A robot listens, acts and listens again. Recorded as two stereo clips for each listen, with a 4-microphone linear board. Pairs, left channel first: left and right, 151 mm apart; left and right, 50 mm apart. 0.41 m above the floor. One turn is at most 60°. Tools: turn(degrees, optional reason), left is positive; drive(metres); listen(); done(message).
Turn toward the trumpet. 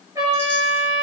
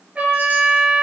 turn(degrees=-25, reason="The trumpet: about 25° right or 155° right.")
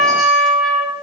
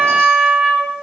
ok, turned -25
done("Facing the trumpet, 2 to 4 m away.")